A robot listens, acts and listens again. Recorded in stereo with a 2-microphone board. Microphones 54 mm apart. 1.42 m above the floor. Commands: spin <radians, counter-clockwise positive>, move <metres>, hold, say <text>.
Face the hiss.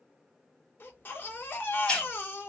spin 0.35
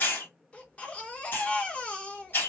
spin 2.44
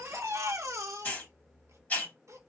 spin 0.52
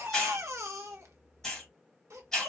say Found it: a hiss, straight ahead.